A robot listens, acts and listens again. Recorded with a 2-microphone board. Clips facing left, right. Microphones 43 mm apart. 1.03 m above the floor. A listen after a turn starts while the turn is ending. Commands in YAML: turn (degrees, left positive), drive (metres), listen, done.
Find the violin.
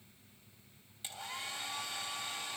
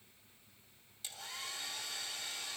listen: true
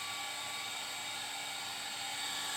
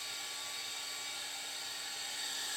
listen: true
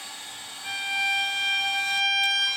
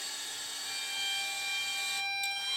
turn: 90
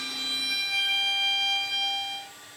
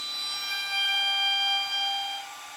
done: "Found it: a violin, straight ahead."